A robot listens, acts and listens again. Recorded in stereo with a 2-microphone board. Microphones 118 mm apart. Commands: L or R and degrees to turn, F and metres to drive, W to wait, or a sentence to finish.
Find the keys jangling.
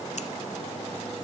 W
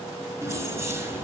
R20
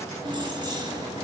R35
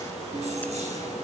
R115
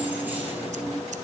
R15
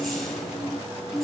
Found it: keys jangling, straight ahead.